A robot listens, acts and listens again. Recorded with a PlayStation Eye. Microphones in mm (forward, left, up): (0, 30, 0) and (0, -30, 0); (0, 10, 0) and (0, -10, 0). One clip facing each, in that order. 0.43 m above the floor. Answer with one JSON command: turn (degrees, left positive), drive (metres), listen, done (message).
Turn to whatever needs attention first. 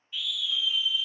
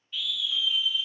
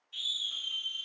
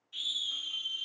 {"turn": 30}
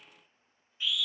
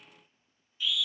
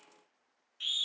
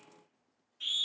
{"turn": 140}
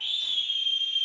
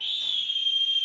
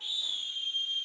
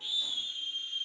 {"turn": 15}
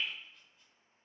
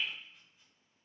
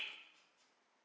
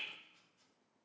{"listen": true}
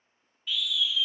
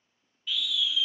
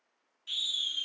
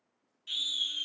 {"done": "Facing the scream."}